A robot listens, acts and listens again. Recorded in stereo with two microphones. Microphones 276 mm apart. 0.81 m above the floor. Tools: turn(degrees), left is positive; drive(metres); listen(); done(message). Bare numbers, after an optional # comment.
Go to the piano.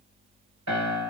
# The piano: about 65° right or 115° right.
turn(-65)
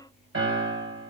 # So it is at 50° right.
turn(-50)
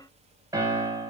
# The piano is now 10° right.
turn(-10)
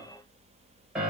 drive(1.0)
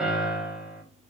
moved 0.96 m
drive(1.0)
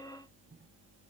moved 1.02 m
listen()
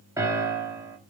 # The piano is now 10° right.
turn(-10)
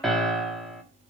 drive(1.0)
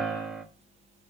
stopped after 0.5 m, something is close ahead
done("I am next to the piano.")